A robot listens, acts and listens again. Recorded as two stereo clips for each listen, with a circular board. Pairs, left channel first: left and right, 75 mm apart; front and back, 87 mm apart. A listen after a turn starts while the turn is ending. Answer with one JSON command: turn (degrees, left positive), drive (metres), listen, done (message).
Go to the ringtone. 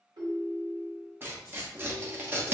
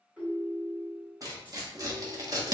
{"turn": -105}
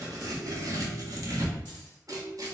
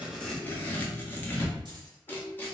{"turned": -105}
{"turn": -25}
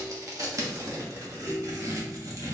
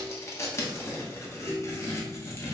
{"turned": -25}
{"turn": -15}
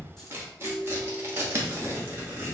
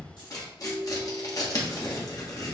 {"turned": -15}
{"drive": 1.0}
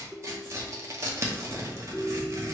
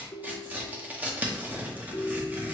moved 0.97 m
{"drive": 1.0}
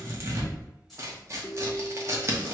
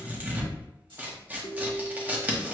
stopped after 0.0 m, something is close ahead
{"done": "Arrived at the ringtone, straight ahead."}